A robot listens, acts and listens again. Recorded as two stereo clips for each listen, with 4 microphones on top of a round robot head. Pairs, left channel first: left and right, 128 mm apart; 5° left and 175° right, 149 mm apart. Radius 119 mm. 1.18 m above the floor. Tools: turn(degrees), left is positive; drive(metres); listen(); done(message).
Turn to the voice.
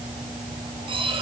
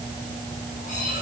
listen()
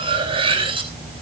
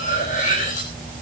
listen()
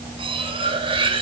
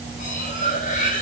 done("I can't make out anyone speaking, only cutlery clinking.")